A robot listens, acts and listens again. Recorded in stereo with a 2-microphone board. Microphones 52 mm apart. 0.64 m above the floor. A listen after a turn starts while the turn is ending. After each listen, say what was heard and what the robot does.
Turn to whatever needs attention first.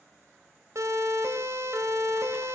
The siren: about 70° right or 110° right. Turn 70° right.
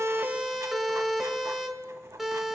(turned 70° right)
Facing the siren.